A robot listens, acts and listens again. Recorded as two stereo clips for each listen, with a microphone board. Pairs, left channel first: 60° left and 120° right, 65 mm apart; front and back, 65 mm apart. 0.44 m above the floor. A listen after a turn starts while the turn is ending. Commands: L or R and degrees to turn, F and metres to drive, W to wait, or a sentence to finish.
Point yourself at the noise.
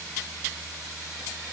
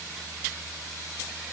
W
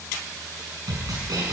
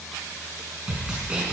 R110
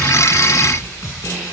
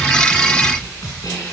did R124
L10
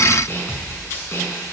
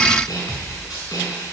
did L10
Facing the snare drum, over 4 m away.